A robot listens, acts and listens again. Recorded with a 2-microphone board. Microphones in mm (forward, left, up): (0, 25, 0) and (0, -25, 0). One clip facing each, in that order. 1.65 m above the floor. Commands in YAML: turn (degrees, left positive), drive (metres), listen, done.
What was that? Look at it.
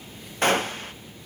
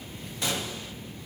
turn: 50
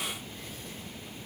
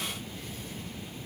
listen: true
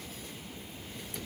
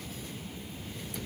done: "I heard a gunshot, but can't make it out now. It was about straight ahead or 80° left."